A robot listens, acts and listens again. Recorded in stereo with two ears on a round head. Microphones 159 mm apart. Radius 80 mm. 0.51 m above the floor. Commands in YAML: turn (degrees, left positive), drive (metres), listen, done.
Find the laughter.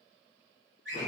listen: true
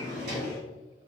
listen: true
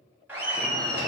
turn: -25
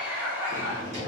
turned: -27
turn: -15
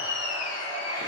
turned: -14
turn: -20
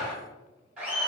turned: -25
done: "Found it: laughter, straight ahead."